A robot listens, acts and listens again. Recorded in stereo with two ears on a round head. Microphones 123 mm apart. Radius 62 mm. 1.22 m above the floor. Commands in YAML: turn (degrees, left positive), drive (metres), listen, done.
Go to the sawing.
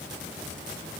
listen: true
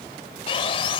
turn: 45
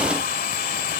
turn: 90
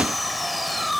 drive: 1.0
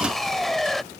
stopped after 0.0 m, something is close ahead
done: "Blocked. The sawing is further on, straight ahead."